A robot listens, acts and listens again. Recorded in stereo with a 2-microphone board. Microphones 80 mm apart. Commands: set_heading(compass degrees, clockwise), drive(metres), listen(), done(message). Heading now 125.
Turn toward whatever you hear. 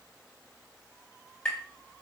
set_heading(95)
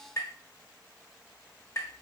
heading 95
set_heading(315)
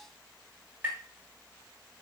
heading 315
set_heading(340)
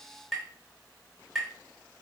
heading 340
done("Facing the tapping, 1 to 2 m away.")